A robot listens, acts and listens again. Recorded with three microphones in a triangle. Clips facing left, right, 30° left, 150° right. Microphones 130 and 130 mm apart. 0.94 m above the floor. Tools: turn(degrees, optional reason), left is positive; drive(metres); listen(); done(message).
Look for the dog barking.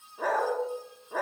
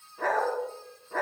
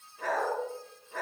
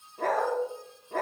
turn(degrees=170, reason="The dog barking: 170° left.")
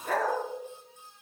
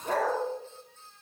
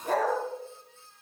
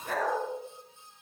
turn(degrees=-25, reason="The dog barking is now 25° right.")
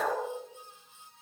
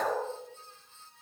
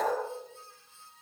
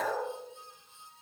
done("Facing the dog barking.")